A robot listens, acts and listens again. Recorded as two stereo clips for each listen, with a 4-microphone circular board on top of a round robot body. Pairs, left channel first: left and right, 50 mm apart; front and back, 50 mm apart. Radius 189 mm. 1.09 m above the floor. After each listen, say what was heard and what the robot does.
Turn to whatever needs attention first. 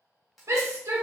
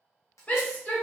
The shout: 65° right. Turn 65° right.
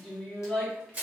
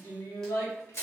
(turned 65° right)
The shout is now 10° left. Turn 10° left.
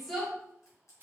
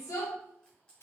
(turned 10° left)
Found it: a shout, straight ahead, 1 to 2 m away.